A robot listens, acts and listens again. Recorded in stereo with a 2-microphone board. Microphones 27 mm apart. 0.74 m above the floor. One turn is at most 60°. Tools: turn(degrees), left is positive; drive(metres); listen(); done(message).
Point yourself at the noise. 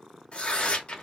turn(degrees=40)
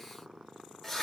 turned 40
done("Facing the tearing paper, under 1 m away.")